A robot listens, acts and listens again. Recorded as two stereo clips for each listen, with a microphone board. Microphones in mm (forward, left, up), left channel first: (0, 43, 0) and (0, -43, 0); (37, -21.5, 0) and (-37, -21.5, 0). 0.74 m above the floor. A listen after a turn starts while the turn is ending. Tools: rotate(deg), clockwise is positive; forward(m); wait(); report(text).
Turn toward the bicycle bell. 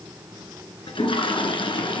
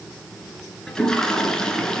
wait()
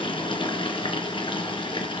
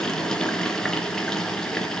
wait()
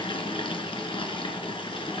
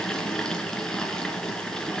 report("I can't make out a bicycle bell, only a toilet flushing.")